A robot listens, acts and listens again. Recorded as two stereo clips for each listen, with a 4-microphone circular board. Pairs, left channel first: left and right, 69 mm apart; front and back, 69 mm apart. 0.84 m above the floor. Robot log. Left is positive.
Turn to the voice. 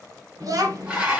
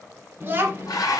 note: The child speaking: 120° right.
cmd yaw -120
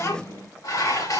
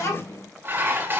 note: The child speaking is now 45° left.
cmd yaw +45
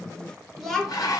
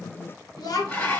end: Found it: a child speaking, straight ahead.